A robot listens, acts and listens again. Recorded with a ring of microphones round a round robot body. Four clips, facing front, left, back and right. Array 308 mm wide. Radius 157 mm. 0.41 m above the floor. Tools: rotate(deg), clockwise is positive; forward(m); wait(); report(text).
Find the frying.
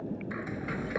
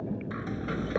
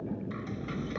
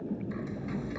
rotate(-70)
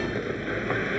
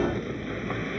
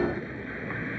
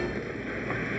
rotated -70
report("Facing the frying.")